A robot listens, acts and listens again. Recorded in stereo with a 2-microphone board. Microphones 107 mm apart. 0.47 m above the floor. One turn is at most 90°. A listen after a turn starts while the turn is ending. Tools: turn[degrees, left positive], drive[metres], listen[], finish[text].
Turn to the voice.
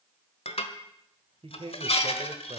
Thought: The man speaking: about 60° right or 120° right.
Action: turn[-60]
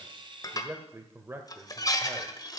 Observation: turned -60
Thought: So it is at 25° right.
Action: turn[-25]
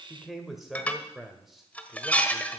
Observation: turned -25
Action: finish[Facing the man speaking, 1 to 2 m away.]